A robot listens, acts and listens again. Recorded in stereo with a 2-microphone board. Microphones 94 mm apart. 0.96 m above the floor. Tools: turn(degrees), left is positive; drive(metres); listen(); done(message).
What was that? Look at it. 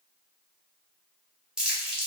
turn(degrees=-30)
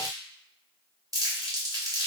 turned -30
turn(degrees=-140)
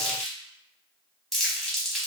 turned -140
done("Found it: crumpling, straight ahead, under 1 m away.")